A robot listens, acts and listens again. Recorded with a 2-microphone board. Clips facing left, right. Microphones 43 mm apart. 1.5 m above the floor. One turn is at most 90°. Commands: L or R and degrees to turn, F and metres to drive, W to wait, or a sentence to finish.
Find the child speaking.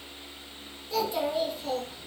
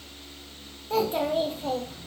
R35
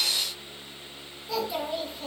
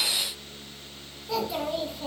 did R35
Found it: a child speaking, straight ahead.